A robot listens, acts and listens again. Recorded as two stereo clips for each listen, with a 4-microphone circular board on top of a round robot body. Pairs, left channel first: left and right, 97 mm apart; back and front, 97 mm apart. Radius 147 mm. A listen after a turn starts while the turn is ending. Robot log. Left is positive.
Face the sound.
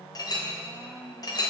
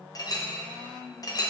note: The clink: 135° left.
cmd yaw +135
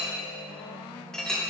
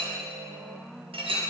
end: Facing the clink.